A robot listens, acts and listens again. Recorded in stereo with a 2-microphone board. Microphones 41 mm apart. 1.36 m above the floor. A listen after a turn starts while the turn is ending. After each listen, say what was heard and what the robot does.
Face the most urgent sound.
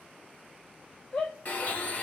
The shout: about 35° left or 145° left. Turn 35° left.
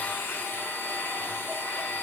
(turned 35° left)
Keep listening.
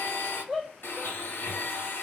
Facing the shout.